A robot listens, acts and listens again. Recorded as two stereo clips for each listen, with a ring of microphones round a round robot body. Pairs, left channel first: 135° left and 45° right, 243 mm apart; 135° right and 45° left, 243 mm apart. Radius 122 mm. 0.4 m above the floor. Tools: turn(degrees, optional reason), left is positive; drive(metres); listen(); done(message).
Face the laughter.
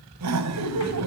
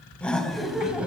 turn(degrees=-40, reason="The laughter: 40° right.")
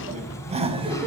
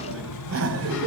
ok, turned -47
turn(degrees=25, reason="The laughter is now 25° left.")
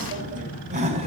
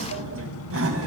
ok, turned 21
turn(degrees=20, reason="The laughter is now 20° left.")
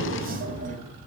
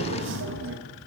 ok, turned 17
turn(degrees=10, reason="The laughter is now 10° left.")
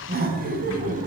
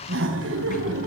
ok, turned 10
turn(degrees=10, reason="The laughter is now 10° left.")
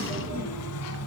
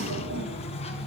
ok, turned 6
listen()
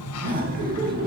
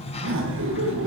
turn(degrees=10, reason="The laughter is now 10° left.")
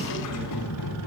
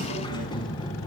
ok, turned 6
listen()
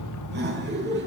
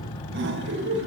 done("Found it: laughter, straight ahead.")